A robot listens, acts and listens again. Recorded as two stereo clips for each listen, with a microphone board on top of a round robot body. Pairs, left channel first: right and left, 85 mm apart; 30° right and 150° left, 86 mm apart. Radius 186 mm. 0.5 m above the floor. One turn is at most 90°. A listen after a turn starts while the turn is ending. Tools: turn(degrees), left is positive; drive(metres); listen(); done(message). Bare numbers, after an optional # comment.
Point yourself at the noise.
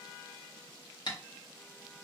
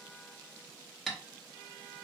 # The tapping: 115° right.
turn(-90)
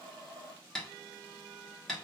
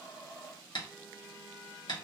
done("Found it: tapping, straight ahead, 1 to 2 m away.")